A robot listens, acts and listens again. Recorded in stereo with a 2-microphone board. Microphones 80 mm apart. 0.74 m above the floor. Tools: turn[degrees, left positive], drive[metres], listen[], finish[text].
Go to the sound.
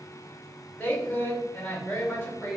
Thought: The woman speaking: about 20° left or 160° left.
Action: turn[20]
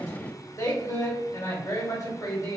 Thought: So it is at 140° left.
Action: turn[140]
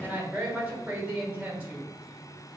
Thought: The woman speaking is now 15° right.
Action: turn[-15]
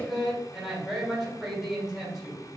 Action: drive[1.0]
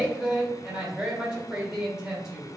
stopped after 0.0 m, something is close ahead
Action: finish[Something is in my way. I am facing the woman speaking but have not reached it.]